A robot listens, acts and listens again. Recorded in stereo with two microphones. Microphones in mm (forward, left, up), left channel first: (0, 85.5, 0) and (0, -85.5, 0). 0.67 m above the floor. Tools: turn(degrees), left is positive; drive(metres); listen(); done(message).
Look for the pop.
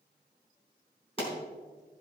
turn(degrees=35)
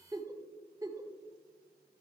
listen()
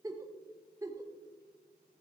done("I heard a pop, but can't make it out now. It was about straight ahead or 110° left.")